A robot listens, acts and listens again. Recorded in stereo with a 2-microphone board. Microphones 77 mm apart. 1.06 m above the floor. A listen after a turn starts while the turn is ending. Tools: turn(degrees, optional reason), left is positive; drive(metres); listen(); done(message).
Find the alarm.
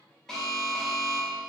turn(degrees=30)
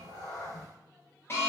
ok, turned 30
turn(degrees=145, reason="So it is at 145° left.")
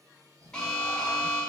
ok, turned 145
turn(degrees=10, reason="The alarm is now 10° left.")
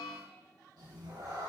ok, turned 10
listen()
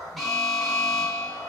done("Facing the alarm.")